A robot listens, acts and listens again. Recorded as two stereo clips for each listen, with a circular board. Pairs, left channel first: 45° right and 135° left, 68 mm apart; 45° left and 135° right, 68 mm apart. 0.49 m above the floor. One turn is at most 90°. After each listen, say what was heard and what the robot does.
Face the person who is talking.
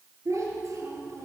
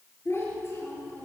The child speaking: 95° left. Turn 90° left.
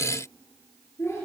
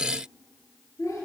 Found it: a child speaking, straight ahead.